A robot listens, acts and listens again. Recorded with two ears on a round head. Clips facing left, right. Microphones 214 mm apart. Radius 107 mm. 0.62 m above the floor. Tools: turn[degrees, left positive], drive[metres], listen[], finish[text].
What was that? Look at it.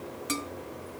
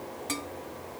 Action: turn[30]
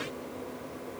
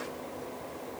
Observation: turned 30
Action: listen[]
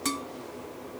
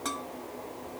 Thought: So it is at 140° left.
Action: turn[140]
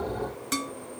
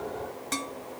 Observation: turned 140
Thought: The dishes clattering is now 15° left.
Action: turn[15]
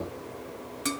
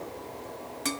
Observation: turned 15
Thought: The dishes clattering is now 10° left.
Action: turn[10]
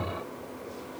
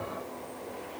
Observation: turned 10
Action: finish[Facing the dishes clattering.]